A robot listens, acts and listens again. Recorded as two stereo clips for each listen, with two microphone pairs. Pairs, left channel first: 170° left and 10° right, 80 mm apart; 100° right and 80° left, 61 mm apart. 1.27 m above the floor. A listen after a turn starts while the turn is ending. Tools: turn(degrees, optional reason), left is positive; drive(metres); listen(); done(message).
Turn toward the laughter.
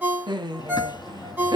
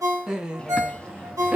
turn(degrees=15, reason="The laughter: 15° left.")
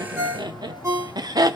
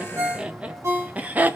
turn(degrees=20, reason="The laughter is now 20° left.")
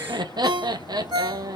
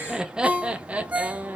turn(degrees=20, reason="The laughter is now 20° left.")
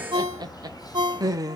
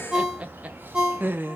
turn(degrees=25, reason="The laughter is now 25° left.")
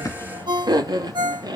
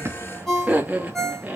turn(degrees=15, reason="The laughter is now 15° left.")
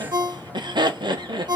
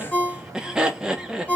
done("Facing the laughter.")